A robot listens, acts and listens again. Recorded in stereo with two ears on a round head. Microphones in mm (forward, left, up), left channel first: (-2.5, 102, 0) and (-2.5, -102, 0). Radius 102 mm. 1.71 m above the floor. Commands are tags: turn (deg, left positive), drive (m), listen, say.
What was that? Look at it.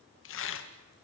<turn deg="55"/>
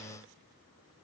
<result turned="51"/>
<listen/>
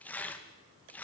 <say>Facing the tearing paper, 2 to 4 m away.</say>